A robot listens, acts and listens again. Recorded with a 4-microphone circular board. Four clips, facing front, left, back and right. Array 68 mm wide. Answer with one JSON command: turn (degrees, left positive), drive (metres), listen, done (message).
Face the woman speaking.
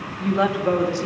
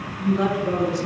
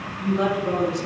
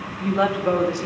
{"turn": -55}
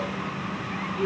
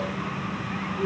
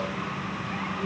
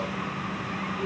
{"listen": true}
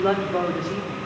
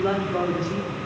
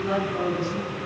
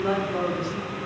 {"turn": 15}
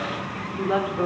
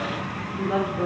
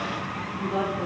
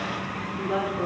{"done": "Found it: a woman speaking, straight ahead, 2 to 4 m away."}